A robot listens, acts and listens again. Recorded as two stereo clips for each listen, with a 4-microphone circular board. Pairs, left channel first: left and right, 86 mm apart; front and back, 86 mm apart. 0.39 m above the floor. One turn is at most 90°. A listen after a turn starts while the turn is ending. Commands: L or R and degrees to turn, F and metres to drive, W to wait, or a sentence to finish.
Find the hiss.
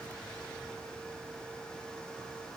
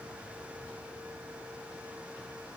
W
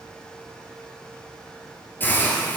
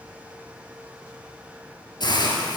L25
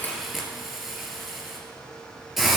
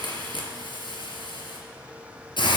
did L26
Facing the hiss.